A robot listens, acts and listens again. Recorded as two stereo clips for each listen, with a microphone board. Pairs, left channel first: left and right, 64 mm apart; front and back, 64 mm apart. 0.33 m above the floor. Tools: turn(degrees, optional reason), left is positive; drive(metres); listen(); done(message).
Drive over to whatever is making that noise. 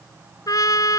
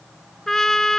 turn(degrees=85, reason="The trumpet: 85° left.")
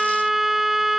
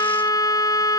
drive(metres=1.0)
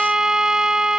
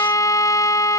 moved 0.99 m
turn(degrees=-10, reason="The trumpet is now 10° right.")
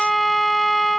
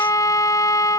drive(metres=1.0)
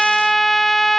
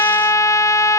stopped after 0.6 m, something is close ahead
done("Arrived at the trumpet, straight ahead.")